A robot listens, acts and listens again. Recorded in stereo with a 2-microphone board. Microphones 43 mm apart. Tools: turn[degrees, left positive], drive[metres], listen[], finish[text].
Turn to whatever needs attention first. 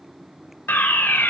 Thought: The fire alarm: about 55° left or 125° left.
Action: turn[55]
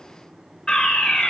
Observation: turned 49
Thought: So it is at 20° left.
Action: turn[20]
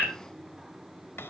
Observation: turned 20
Action: finish[Facing the fire alarm, over 4 m away.]